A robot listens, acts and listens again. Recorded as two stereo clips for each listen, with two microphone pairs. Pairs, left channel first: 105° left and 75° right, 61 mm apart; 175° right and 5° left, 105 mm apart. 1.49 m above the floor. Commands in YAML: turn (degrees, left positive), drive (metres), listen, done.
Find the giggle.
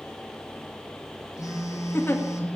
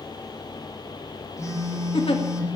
turn: 160
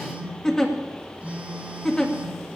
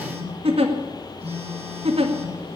turn: 25
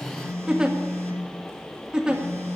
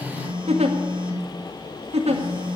done: "Found it: a giggle, straight ahead, 1 to 2 m away."